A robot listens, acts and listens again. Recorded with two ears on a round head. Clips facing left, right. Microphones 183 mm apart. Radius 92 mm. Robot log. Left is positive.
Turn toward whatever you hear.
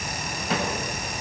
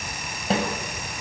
note: The snare drum: about 25° right or 155° right.
cmd yaw -25
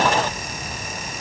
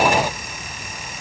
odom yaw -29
cmd idle
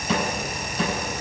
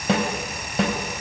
note: So it is at 125° right.
cmd yaw -125
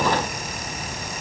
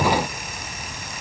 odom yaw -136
note: Nothing new. It was at 10° left.
cmd yaw +10
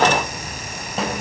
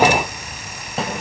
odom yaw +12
end: Facing the snare drum.